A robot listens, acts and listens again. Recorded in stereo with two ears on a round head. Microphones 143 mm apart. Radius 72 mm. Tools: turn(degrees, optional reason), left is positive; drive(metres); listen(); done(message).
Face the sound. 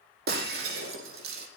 turn(degrees=-70, reason="The breaking glass: about 70° right or 110° right.")
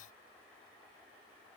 listen()
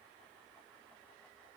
done("I heard breaking glass, but can't make it out now. It was about straight ahead or 40° right.")